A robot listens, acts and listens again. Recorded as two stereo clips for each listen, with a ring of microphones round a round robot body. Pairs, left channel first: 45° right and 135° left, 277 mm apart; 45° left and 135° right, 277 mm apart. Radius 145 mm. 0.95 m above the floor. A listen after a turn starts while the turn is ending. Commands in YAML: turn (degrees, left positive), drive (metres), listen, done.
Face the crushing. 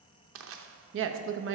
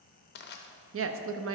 turn: 95
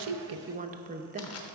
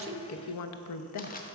turn: -15
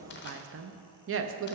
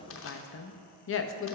listen: true
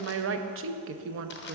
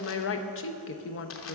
listen: true
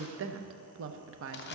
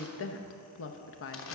done: "Facing the crushing, under 1 m away."